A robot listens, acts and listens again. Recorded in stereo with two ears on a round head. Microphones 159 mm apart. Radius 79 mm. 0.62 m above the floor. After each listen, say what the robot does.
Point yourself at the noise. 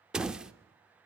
Turn 30° right.
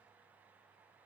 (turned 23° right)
Keep listening.
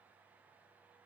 I heard a door slam, but can't make it out now. It was about 20° left or 155° right.